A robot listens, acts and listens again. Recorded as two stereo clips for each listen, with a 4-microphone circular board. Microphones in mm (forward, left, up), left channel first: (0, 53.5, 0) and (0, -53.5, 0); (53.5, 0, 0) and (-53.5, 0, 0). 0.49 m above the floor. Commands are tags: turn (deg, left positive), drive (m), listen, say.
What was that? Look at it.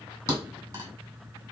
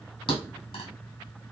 <turn deg="-35"/>
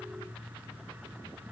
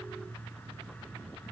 <say>Facing where the thud came from. I can't hear it now.</say>